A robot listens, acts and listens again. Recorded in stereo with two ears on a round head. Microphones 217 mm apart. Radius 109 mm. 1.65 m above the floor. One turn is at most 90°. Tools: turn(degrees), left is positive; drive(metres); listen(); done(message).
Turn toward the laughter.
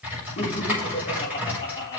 turn(degrees=15)
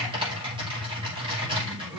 listen()
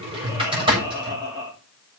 turn(degrees=-15)
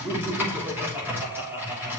turn(degrees=-10)
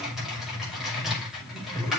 listen()
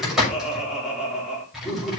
done("Found it: laughter, straight ahead.")